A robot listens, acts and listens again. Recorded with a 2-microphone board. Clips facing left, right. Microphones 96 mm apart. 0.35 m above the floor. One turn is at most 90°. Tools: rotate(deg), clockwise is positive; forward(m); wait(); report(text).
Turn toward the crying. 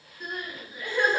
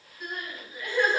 rotate(30)
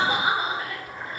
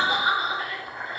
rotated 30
rotate(-30)
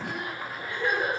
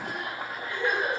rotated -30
report("Found it: crying, straight ahead, 1 to 2 m away.")